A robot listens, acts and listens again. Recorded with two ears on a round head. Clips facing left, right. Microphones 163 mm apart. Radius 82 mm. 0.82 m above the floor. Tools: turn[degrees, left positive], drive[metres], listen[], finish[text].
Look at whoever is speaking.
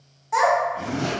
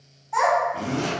Action: turn[90]
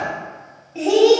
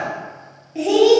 Thought: So it is at 10° right.
Action: turn[-10]
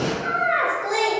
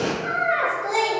Action: finish[Found it: a child speaking, straight ahead.]